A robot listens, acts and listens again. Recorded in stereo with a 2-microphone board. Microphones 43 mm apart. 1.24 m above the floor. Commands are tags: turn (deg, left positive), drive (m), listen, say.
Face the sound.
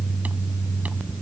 <listen/>
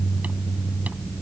<listen/>
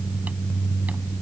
<say>I can't make out anything.</say>